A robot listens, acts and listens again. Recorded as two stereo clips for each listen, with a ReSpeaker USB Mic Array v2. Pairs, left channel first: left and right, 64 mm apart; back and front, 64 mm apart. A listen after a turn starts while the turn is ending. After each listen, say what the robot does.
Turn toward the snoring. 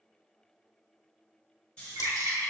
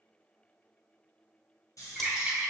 Turn 160° left.
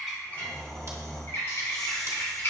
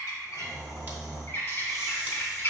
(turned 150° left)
Turn 10° left.
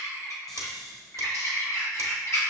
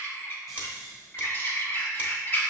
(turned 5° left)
Found it: snoring, straight ahead.